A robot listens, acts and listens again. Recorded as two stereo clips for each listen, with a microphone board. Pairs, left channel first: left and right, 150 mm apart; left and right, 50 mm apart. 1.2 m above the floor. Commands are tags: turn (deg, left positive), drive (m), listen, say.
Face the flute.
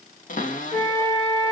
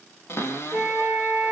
<turn deg="30"/>
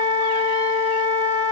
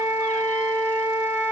<turn deg="-30"/>
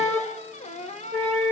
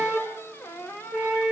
<turn deg="-10"/>
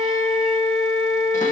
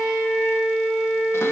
<say>Found it: a flute, straight ahead.</say>